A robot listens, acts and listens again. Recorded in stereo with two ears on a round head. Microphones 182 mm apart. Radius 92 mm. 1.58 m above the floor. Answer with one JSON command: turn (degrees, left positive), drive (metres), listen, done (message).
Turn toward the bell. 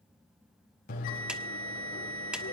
{"turn": 45}
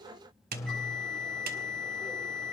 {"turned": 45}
{"done": "Found it: a bell, straight ahead."}